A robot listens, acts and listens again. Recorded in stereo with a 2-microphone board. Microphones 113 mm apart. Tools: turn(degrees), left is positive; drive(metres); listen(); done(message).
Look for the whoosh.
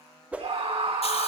turn(degrees=-30)
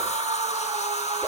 listen()
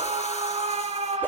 listen()
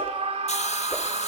done("I heard a whoosh, but can't make it out now. It was about 20° left or 140° right.")